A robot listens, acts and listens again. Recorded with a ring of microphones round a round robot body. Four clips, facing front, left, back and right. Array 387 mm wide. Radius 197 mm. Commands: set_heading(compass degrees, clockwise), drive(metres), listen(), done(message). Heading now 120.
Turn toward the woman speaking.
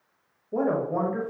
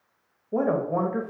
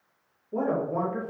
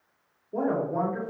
set_heading(40)
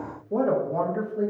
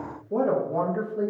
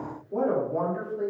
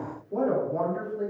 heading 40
set_heading(345)
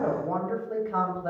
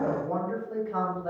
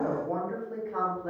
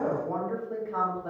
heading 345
done("Found it: a woman speaking, straight ahead, 1 to 2 m away.")